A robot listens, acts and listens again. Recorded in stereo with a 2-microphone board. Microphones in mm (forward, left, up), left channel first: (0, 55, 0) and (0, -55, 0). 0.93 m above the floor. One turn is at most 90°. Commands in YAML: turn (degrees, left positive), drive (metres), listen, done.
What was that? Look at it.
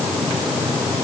listen: true
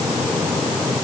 listen: true
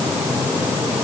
done: "I can't make out anything to turn to."